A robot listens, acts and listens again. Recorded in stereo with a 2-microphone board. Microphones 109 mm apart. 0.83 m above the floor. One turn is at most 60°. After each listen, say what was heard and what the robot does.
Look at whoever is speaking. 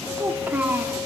The child speaking: about 15° right or 165° right. Turn 15° right.
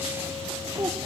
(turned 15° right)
So it is at 150° right. Turn 60° right.
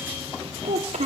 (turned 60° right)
The child speaking is now 80° right. Turn 60° right.
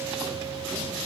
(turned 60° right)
Nothing new. It was at 20° right. Turn 20° right.
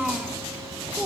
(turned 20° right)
Facing the child speaking.